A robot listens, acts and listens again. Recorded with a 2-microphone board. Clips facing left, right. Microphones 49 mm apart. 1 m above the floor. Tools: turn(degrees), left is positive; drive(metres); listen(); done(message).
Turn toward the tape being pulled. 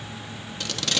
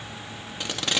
turn(degrees=-20)
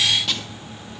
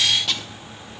done("Facing the tape being pulled, under 1 m away.")